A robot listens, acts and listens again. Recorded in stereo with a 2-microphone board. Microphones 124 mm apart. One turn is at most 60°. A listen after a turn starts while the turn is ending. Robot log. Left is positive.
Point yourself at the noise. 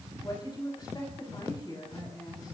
note: The woman speaking: about 35° left or 145° left.
cmd yaw +35
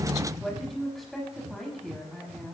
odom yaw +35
end: Found it: a woman speaking, straight ahead, over 4 m away.